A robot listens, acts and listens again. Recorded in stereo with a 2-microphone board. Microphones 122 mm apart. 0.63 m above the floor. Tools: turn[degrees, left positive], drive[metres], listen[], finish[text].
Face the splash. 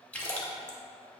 Action: turn[30]
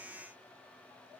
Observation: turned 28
Action: listen[]
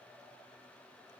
Action: finish[I heard a splash, but can't make it out now. It was about 15° right or 140° left.]